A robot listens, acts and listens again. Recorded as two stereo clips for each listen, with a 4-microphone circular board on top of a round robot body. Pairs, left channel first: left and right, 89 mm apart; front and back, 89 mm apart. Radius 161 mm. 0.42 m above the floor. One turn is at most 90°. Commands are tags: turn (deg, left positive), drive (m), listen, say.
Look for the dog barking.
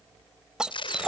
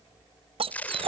<turn deg="-90"/>
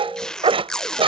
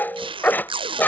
<turn deg="-70"/>
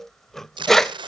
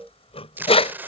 <say>Found it: a dog barking, straight ahead.</say>